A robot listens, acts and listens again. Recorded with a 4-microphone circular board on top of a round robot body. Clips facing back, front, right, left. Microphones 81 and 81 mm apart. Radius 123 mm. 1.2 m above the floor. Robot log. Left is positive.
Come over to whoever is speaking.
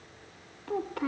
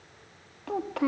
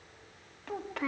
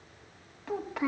note: The child speaking: 10° left.
cmd yaw +10
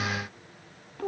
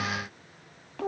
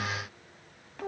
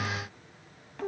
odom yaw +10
cmd fwd 1.0
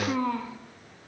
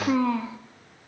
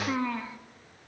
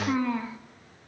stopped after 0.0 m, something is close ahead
end: Something is in my way. I am facing the child speaking but have not reached it.